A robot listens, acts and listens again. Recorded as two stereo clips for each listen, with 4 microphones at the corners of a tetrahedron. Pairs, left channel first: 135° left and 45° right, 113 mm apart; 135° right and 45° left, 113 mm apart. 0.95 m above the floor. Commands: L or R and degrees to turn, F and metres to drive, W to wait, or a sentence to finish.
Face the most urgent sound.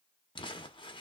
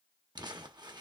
W
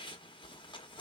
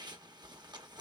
W
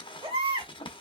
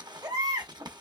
Facing the baby crying.